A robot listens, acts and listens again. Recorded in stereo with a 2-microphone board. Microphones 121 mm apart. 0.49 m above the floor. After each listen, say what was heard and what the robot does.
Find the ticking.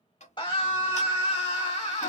The ticking: about 70° left or 110° left. Turn 70° left.
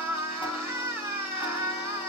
Keep listening.
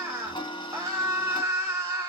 So it is at 40° left. Turn 40° left.
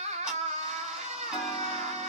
Keep listening.
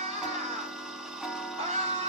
Facing the ticking, 1 to 2 m away.